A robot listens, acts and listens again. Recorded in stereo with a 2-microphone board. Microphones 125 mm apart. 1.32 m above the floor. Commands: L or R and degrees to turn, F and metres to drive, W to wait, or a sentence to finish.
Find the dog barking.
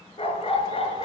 L50
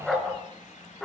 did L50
Found it: a dog barking, straight ahead.